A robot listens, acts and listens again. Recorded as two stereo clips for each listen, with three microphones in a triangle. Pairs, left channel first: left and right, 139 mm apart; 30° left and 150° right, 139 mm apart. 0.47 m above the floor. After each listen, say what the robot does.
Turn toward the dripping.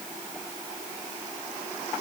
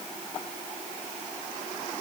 Keep listening.
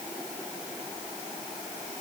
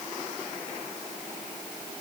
Keep listening.
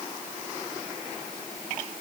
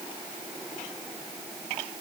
I can't make out dripping.